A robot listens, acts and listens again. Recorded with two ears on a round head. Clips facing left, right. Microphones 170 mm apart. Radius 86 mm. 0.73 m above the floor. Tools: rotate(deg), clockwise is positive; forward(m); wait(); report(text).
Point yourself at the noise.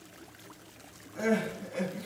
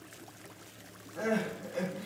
rotate(-30)
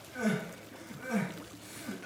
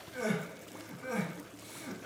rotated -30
report("Facing the crying, 1 to 2 m away.")